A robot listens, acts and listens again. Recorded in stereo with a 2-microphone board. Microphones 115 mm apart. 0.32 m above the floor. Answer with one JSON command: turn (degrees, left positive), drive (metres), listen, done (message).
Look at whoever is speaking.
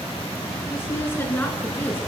{"turn": 20}
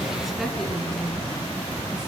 {"turn": 30}
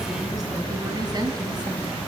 {"turn": -40}
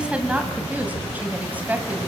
{"turn": -15}
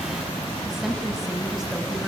{"done": "Found it: a woman speaking, straight ahead."}